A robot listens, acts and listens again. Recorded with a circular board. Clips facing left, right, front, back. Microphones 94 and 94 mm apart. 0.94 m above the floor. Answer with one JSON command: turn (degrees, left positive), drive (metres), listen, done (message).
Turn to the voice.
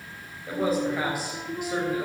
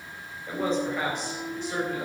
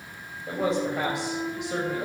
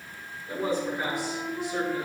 {"turn": 10}
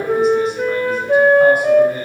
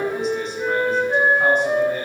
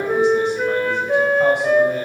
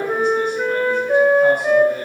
{"listen": true}
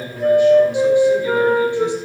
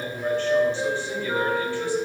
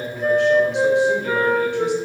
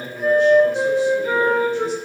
{"turn": 10}
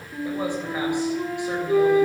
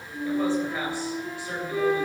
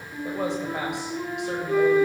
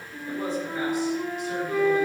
{"listen": true}
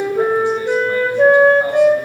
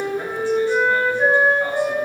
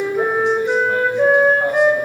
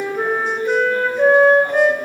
{"listen": true}
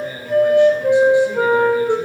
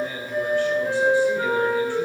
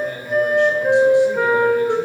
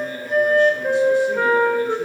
{"turn": 20}
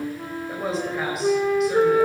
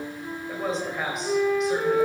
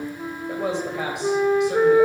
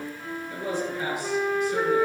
{"done": "Found it: a man speaking, straight ahead."}